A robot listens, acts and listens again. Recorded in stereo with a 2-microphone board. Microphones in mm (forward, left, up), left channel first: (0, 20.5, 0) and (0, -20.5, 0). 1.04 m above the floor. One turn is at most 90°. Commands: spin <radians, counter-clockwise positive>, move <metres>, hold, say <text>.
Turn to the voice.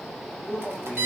spin -0.52
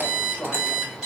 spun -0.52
hold
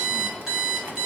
hold
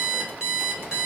say I heard a man speaking, but can't make it out now. It was about 15° left or 135° right.